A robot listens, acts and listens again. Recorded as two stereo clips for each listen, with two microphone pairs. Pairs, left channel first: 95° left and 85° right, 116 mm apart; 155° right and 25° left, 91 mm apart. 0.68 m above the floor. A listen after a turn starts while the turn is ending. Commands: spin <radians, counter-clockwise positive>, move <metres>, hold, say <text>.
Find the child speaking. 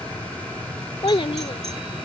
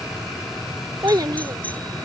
spin 1.05
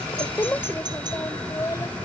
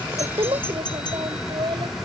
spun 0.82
spin 0.61
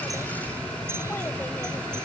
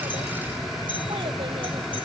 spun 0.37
spin 0.26
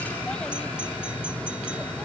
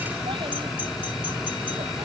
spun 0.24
hold
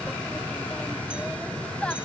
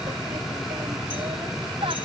spin 0.26
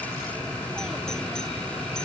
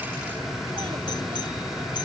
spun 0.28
hold
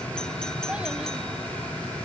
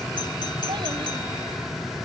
hold
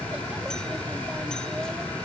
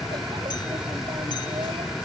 say I heard a child speaking from this way, but can't make it out now.